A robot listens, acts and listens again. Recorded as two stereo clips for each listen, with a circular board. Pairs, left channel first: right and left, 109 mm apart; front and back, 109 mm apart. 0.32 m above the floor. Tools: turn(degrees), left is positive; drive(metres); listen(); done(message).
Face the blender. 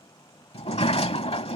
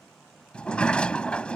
listen()
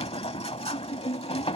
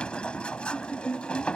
listen()
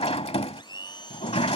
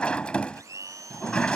turn(degrees=-125)
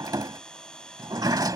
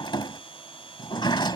turn(degrees=-10)
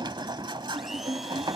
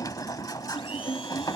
listen()
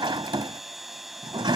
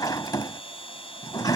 done("Found it: a blender, straight ahead.")